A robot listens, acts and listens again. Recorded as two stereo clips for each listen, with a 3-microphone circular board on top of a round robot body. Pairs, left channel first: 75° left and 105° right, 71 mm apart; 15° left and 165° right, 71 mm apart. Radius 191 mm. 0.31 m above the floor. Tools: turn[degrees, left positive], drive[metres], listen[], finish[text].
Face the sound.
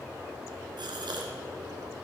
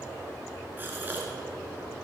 Thought: The gasp: 100° right.
Action: turn[-100]
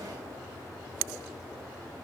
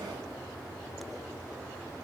Action: finish[Facing where the gasp came from. I can't hear it now.]